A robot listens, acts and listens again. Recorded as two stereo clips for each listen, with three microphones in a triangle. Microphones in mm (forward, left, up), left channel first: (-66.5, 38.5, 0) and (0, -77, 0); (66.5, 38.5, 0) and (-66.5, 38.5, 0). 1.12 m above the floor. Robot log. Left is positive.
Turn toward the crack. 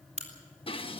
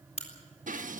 note: The crack: 30° right.
cmd yaw -30
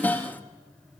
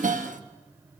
end: I heard a crack from this way, but can't make it out now.